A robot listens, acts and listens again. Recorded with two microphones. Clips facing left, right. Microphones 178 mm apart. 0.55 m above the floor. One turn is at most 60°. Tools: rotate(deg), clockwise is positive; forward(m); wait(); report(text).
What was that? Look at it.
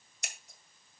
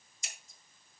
rotate(-60)
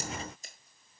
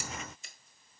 wait()
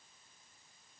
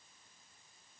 wait()
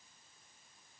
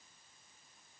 report("I heard scissors, but can't make it out now. It was about 10° left or 50° left.")